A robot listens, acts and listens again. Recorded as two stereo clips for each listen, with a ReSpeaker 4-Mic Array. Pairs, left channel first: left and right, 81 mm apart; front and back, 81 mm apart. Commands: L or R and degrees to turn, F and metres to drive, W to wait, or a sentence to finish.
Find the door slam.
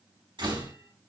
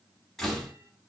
R85
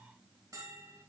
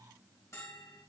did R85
I heard a door slam from this way, but can't make it out now.